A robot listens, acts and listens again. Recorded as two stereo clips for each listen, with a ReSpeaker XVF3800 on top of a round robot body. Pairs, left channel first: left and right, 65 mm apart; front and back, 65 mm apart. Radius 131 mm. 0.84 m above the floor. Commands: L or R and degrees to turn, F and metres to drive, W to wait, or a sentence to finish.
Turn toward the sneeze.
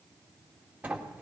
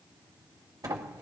W
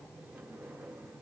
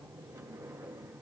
W
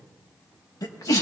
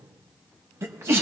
L130
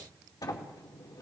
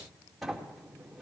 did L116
L15
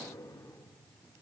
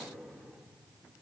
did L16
Facing where the sneeze came from. I can't hear it now.